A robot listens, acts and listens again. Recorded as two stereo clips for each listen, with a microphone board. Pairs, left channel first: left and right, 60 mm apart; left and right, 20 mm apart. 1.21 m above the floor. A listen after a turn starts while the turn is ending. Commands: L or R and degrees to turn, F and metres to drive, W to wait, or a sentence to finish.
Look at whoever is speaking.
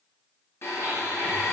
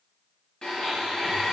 W
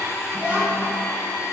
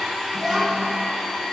R25
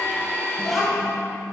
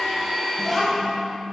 Facing the child speaking, under 1 m away.